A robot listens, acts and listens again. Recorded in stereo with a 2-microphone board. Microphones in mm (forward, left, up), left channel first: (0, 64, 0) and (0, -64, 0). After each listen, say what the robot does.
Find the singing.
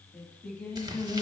Turn 15° left.
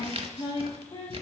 Turn 135° left.
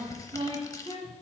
Turn 50° right.
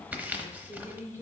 Turn 15° right.
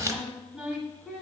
Found it: singing, straight ahead.